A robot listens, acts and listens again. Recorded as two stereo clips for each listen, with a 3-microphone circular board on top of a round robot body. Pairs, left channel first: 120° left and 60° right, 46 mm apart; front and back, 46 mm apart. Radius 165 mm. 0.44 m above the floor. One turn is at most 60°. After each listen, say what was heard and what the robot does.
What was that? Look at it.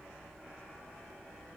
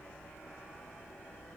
Keep listening.
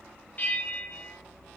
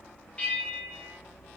The bell: 60° left. Turn 60° left.
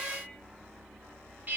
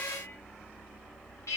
Facing the bell.